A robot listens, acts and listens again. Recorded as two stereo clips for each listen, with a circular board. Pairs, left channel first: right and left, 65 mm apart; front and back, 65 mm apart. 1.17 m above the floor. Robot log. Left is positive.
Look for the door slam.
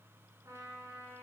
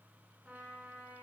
cmd idle
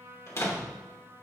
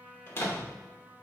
note: The door slam: 50° right.
cmd yaw -50
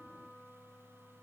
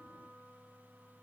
end: Facing where the door slam came from. I can't hear it now.